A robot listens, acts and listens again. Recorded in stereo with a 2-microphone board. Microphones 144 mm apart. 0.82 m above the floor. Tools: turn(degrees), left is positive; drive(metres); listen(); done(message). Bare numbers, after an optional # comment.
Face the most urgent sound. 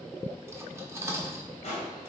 listen()
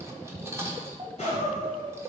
# The crying: about 45° right or 135° right.
turn(-45)
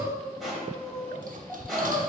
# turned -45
done("Facing the crying, 1 to 2 m away.")